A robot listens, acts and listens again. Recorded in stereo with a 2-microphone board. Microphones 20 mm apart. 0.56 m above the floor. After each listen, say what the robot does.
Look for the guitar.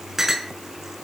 Keep listening.
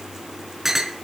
Keep listening.
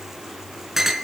I can't make out a guitar, only a clink.